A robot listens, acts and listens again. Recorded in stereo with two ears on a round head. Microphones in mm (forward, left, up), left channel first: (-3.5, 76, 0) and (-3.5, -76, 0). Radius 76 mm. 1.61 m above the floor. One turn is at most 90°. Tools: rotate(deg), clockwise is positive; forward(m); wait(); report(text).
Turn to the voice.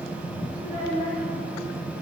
rotate(40)
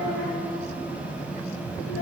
rotate(90)
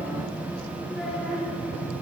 wait()
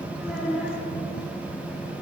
report("Found it: a child speaking, straight ahead.")